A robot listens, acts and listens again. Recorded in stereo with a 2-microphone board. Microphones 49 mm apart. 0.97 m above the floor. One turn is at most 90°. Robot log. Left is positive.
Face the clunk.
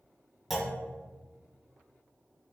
cmd yaw -30
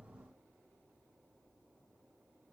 cmd idle
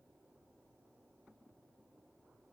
end: I heard a clunk, but can't make it out now. It was about 25° left or 145° right.